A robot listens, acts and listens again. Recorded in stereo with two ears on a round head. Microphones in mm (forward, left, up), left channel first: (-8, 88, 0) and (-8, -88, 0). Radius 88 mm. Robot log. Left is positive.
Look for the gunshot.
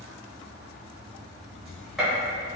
cmd yaw +30
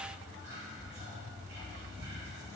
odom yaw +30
cmd idle
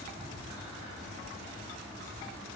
end: I heard a gunshot, but can't make it out now. It was about 30° right or 150° left.